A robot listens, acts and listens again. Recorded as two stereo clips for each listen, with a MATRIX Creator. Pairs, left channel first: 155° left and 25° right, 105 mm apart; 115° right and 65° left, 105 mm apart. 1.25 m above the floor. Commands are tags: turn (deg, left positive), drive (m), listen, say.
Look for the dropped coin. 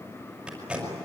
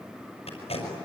<listen/>
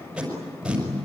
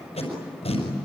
<listen/>
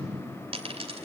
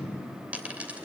<turn deg="-10"/>
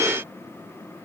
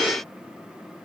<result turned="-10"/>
<say>Facing where the dropped coin came from. I can't hear it now.</say>